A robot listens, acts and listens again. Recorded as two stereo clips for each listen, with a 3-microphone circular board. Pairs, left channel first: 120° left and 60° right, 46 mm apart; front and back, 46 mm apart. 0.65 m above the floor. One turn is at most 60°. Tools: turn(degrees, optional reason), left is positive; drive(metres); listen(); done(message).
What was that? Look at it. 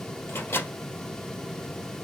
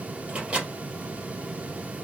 turn(degrees=60, reason="The microwave: 115° left.")
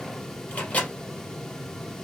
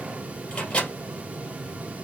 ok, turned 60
turn(degrees=60, reason="The microwave is now 60° left.")
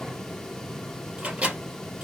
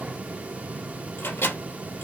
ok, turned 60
done("Found it: a microwave, straight ahead.")